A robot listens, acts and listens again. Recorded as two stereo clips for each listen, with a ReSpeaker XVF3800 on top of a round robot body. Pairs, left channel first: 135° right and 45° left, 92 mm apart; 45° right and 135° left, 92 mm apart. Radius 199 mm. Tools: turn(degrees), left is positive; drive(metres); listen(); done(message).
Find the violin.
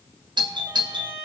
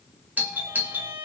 turn(degrees=110)
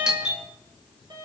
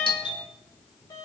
done("Facing the violin.")